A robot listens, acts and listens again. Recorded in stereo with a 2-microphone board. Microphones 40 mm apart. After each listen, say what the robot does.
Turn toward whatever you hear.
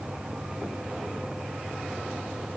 Keep listening.
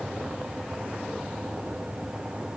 Keep listening.
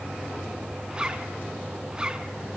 Turn 25° right.
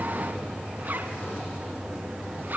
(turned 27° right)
Turn 130° right.
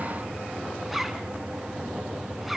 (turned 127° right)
Found it: a zipper, straight ahead.